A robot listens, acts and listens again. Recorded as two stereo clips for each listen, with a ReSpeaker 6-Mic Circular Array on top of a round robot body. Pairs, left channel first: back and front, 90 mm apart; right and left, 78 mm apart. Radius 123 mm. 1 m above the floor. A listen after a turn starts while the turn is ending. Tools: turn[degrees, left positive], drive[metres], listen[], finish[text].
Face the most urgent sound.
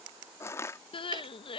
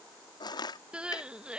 Thought: The crying: 165° left.
Action: turn[165]
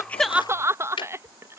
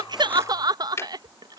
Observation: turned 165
Thought: The crying is now 60° left.
Action: turn[60]
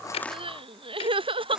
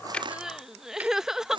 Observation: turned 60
Action: finish[Facing the crying.]